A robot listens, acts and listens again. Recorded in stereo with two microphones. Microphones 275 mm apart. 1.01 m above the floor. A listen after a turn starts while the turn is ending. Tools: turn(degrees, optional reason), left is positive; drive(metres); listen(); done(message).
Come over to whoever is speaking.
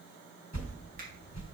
listen()
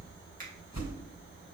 listen()
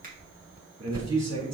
turn(degrees=-70, reason="The man speaking: about 70° right or 110° right.")
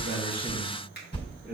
drive(metres=1.0)
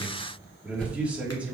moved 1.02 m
drive(metres=1.0)
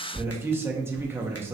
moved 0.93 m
turn(degrees=-10, reason="The man speaking is now 10° right.")
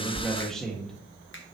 drive(metres=1.0)
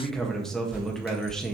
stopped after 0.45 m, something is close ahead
done("I am next to the man speaking.")